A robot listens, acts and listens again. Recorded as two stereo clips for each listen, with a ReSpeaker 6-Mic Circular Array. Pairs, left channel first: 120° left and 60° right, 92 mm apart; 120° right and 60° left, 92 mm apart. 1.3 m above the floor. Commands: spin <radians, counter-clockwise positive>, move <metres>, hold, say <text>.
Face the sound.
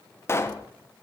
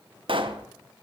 spin 1.05
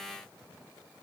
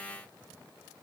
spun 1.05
say I heard a pop from this way, but can't make it out now.